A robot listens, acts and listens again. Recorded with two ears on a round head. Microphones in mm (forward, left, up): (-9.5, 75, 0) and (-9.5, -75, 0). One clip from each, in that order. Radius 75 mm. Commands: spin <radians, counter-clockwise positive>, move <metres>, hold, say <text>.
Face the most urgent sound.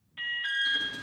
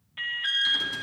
spin -0.52
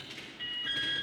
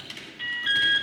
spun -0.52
spin -2.44
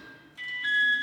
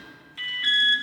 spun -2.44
spin -0.70
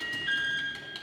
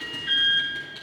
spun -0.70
spin 0.17
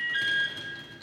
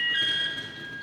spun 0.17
say Facing the alarm.